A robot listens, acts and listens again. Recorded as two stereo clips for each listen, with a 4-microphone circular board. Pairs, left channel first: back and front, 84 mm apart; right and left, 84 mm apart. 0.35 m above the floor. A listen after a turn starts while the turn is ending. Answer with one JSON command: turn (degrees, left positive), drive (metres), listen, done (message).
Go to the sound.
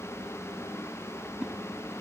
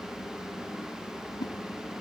{"turn": -80}
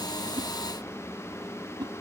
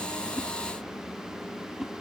{"drive": 1.0}
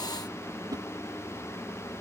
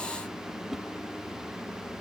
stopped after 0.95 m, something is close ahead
{"done": "I am next to the whoosh."}